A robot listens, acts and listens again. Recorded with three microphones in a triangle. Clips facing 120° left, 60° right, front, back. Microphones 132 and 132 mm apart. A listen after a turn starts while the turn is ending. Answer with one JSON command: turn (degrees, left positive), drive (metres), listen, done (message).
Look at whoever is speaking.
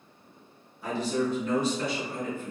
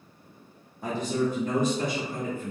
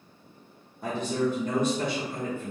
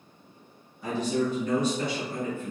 {"turn": -30}
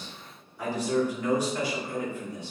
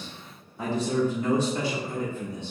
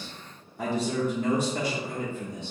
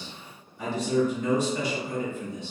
{"done": "Found it: a man speaking, straight ahead."}